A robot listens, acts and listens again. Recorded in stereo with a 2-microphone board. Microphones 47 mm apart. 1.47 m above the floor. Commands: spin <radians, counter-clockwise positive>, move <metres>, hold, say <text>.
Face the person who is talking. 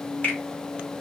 hold
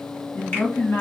spin 1.22
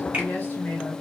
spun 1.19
spin 0.70
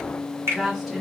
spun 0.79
say Found it: a woman speaking, straight ahead, 2 to 4 m away.